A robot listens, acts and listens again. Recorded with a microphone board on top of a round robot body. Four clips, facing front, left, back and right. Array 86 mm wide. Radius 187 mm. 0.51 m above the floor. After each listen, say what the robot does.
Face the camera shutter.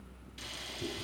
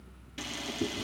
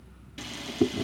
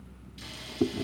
Turn 120° left.
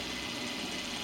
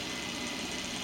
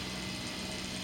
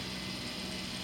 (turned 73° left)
Turn 50° left.
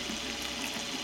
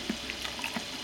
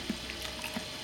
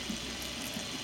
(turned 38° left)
Turn 10° left.
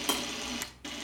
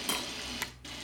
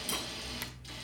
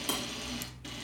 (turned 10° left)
Facing the camera shutter, 2 to 4 m away.